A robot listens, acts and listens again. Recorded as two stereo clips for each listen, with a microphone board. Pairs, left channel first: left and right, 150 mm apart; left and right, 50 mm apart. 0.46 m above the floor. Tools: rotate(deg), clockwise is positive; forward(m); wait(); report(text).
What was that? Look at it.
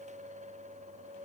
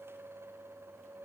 wait()
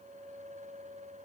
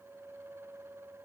wait()
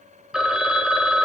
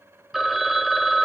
rotate(30)
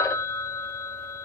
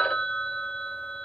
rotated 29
rotate(-20)
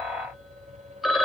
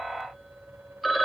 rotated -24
report("Found it: a phone ringing, straight ahead.")